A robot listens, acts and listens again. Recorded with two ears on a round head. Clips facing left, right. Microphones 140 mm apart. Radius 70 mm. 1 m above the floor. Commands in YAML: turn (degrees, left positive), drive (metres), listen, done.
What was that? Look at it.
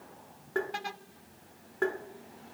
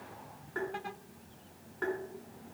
turn: 65
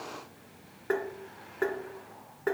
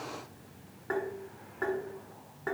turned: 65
turn: 35
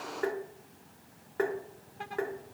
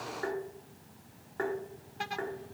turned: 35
turn: 30
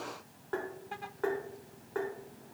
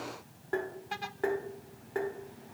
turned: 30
turn: -20
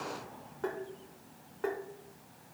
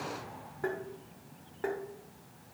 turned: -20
done: "Found it: tapping, straight ahead."